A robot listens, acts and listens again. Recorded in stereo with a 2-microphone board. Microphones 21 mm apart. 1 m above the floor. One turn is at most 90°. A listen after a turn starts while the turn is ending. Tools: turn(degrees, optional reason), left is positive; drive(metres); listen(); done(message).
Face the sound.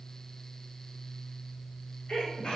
turn(degrees=50, reason="The sneeze: about 50° left or 130° left.")
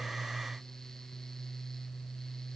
listen()
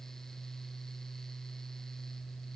done("I heard a sneeze, but can't make it out now. It was about straight ahead or 80° left.")